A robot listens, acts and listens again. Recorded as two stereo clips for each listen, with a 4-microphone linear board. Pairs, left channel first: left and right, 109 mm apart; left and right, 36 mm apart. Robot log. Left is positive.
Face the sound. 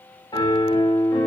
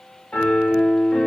note: The piano: about 45° left or 135° left.
cmd yaw +45
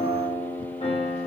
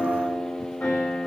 note: So it is at 90° left.
cmd yaw +90
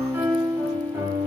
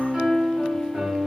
note: The piano is now 25° right.
cmd yaw -25
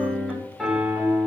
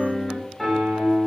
end: Found it: a piano, straight ahead.